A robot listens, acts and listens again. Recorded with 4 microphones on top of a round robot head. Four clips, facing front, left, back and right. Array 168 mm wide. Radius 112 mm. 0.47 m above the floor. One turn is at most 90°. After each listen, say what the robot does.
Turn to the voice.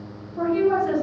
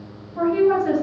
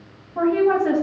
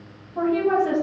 Turn 90° right.
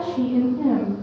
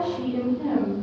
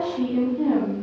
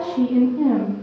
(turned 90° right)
Turn 50° right.
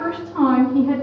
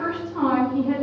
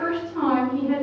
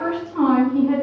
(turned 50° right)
Facing the woman speaking.